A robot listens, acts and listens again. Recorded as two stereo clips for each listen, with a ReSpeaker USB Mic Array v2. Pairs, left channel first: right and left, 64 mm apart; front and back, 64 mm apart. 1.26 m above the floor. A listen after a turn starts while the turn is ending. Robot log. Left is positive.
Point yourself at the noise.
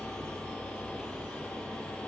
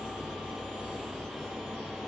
cmd idle
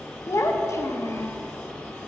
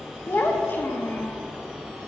note: The child speaking: 55° right.
cmd yaw -55
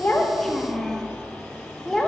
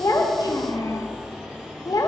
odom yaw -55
end: Found it: a child speaking, straight ahead, under 1 m away.